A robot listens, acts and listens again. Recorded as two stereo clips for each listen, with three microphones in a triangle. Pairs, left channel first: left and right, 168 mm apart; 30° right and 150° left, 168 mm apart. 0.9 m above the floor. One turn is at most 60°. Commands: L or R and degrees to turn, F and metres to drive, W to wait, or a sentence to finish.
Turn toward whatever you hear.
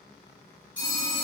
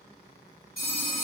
R15
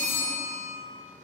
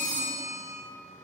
Found it: a phone ringing, straight ahead.